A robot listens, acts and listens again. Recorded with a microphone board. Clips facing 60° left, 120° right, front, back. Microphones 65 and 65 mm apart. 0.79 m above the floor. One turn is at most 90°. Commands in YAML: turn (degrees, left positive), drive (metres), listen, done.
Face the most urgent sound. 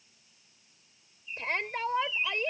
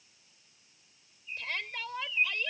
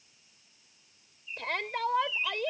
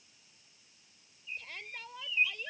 done: "Found it: a shout, straight ahead."